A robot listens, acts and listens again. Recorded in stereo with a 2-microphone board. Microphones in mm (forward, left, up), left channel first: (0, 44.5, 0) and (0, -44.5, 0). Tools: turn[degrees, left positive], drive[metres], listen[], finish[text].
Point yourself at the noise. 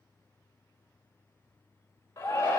Thought: The shout: about 35° left or 145° left.
Action: turn[35]
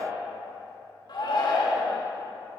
Thought: So it is at 110° left.
Action: turn[110]
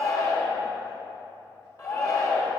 Thought: The shout is now 45° left.
Action: turn[45]
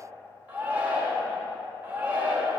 Thought: The shout is now 20° right.
Action: turn[-20]
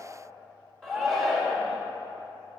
Action: finish[Found it: a shout, straight ahead.]